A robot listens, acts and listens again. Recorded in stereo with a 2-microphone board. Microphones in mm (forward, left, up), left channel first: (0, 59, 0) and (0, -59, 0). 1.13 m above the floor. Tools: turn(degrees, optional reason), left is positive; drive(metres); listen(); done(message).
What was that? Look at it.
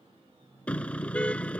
turn(degrees=30)
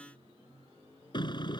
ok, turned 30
turn(degrees=140, reason="So it is at 140° left.")
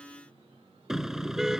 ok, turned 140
done("Facing the car horn.")